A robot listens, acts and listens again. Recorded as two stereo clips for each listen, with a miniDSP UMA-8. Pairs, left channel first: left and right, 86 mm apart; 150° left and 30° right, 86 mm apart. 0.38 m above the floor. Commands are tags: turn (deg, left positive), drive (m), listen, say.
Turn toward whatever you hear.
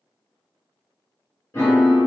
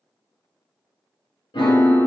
<turn deg="155"/>
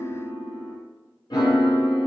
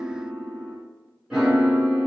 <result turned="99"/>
<turn deg="55"/>
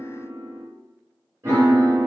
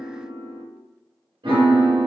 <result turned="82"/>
<turn deg="-30"/>
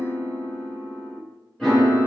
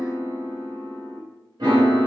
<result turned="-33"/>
<say>Found it: a piano, straight ahead.</say>